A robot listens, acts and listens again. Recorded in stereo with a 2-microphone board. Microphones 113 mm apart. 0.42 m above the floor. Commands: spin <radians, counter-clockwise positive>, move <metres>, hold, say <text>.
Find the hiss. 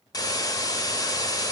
spin 0.61
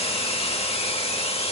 spin 1.83
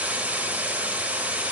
spin -0.26
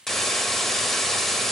say Found it: a hiss, straight ahead.